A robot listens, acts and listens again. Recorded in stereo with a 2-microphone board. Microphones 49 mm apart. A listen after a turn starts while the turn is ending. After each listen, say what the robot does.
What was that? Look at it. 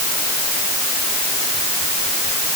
Keep listening.
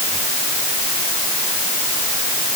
Keep listening.
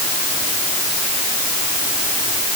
I can't make out anything to turn to.